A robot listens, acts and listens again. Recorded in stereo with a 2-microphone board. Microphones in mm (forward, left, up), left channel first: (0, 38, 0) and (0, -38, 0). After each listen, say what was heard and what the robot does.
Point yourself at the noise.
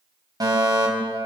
The fire alarm: about 55° right or 125° right. Turn 55° right.
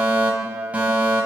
So it is at 20° right. Turn 20° right.
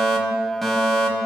Found it: a fire alarm, straight ahead, over 4 m away.